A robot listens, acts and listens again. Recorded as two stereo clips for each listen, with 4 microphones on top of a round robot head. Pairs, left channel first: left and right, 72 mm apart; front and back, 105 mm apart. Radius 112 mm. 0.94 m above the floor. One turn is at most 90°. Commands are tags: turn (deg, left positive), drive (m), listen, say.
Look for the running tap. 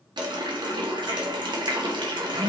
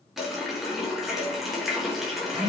<turn deg="-90"/>
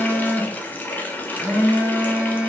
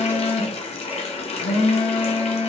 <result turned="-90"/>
<turn deg="25"/>
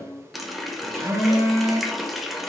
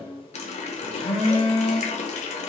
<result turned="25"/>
<say>Facing the running tap.</say>